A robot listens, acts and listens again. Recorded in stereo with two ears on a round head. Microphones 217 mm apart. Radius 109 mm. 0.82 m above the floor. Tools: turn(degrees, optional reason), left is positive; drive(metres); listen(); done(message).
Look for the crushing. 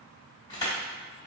turn(degrees=15, reason="The crushing: about 15° left or 165° left.")
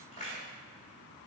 turn(degrees=150, reason="So it is at 150° left.")
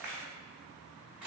done("Found it: crushing, straight ahead, 1 to 2 m away.")